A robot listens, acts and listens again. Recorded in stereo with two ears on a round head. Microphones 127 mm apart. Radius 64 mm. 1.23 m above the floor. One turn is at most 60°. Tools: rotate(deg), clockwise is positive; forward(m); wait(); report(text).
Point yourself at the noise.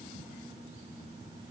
wait()
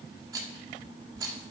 rotate(25)
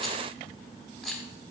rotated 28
report("Facing the rattle, 1 to 2 m away.")